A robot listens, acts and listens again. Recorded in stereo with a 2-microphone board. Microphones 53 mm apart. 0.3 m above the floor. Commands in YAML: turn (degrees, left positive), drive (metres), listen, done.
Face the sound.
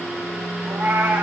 turn: -45
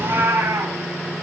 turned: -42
turn: -95
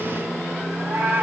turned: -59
turn: -40
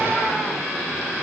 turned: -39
listen: true
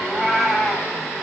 done: "Found it: a cat meowing, straight ahead, over 4 m away."